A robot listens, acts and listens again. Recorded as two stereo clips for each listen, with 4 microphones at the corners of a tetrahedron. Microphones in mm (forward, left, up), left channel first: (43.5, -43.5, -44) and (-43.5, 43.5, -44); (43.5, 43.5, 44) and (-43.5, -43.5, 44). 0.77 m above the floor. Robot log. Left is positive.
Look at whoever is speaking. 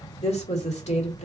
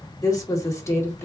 note: The woman speaking: 25° right.
cmd yaw -25
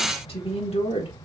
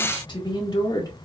note: The woman speaking is now 10° right.
cmd yaw -10
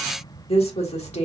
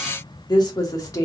note: The woman speaking is now 15° right.
cmd yaw -15
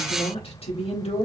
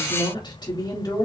note: The woman speaking is now 15° right.
cmd yaw -15
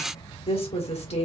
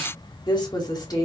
note: The woman speaking is now 15° right.
cmd yaw -15
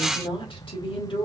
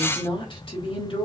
end: Facing the woman speaking.